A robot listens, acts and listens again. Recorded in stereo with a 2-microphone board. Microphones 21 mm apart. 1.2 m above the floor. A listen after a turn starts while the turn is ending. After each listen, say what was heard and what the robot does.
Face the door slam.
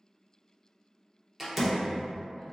Turn 30° right.
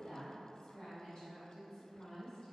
Keep listening.
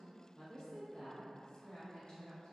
I heard a door slam, but can't make it out now. It was about 20° left or 140° right.